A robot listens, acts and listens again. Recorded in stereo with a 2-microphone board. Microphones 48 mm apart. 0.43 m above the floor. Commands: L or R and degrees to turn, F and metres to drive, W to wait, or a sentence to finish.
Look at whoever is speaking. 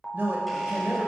R50
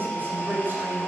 R65
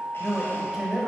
R10
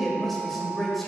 Facing the man speaking.